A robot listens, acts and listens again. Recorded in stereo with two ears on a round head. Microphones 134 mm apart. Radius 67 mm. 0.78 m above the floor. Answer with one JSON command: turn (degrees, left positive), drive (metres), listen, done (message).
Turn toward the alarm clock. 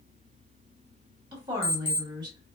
{"turn": 40}
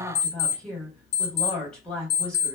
{"turn": 100}
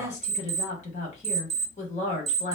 {"turn": -20}
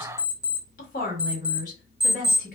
{"done": "Facing the alarm clock, under 1 m away."}